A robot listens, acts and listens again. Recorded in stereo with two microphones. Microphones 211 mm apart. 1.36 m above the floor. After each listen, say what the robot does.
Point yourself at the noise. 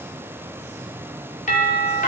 Turn 40° left.
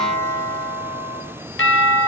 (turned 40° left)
Turn 95° left.
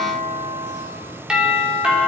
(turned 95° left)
Facing the doorbell, over 4 m away.